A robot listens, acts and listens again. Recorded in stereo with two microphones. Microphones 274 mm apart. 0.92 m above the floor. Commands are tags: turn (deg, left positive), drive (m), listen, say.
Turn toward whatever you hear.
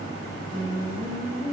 <turn deg="-40"/>
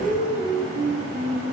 <turn deg="-105"/>
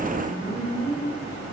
<turn deg="15"/>
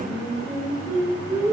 <say>Found it: singing, straight ahead, 2 to 4 m away.</say>